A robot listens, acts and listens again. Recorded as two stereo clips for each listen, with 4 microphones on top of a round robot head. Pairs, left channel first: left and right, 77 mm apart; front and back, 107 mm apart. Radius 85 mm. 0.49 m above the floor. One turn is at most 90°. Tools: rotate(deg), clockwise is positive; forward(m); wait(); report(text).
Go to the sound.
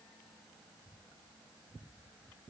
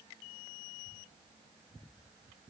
wait()
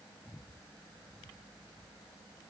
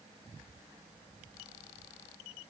wait()
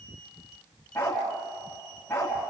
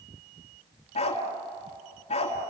rotate(-20)
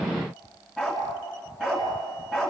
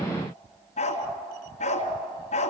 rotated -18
forward(1.0)
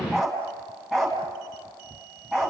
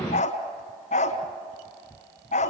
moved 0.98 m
forward(1.0)
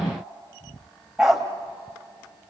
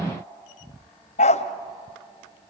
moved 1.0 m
forward(1.0)
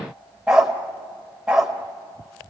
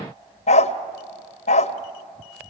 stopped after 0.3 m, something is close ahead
rotate(10)
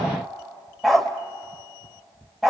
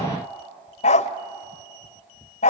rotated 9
report("Arrived at the dog barking, straight ahead.")